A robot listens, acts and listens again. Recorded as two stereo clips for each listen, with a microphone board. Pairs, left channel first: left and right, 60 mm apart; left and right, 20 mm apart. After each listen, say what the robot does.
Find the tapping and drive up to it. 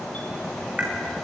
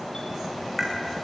Turn 25° right.
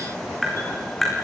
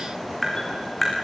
Drive 1.0 m forward.
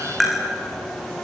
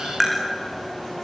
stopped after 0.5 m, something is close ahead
Blocked. The tapping is further on, straight ahead.